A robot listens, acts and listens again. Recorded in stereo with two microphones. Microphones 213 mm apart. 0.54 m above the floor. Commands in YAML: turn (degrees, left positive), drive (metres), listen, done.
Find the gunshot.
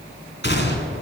turn: 50
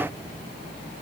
listen: true
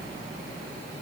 done: "I heard a gunshot, but can't make it out now. It was about straight ahead or 80° left."